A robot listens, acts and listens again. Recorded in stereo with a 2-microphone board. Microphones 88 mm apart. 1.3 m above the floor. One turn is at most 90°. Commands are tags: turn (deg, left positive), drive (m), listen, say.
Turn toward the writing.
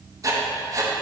<turn deg="-40"/>
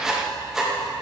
<say>Found it: writing, straight ahead, under 1 m away.</say>